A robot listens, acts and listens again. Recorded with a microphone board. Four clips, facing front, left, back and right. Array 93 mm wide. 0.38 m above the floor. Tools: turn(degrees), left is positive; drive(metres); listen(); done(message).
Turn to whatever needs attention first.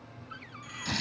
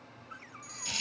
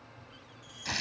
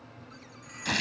turn(degrees=-35)
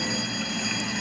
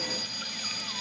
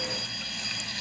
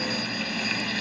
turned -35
listen()
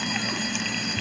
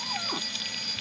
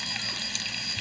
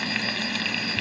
listen()
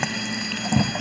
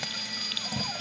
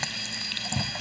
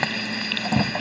done("I heard a fire alarm from this way, but can't make it out now.")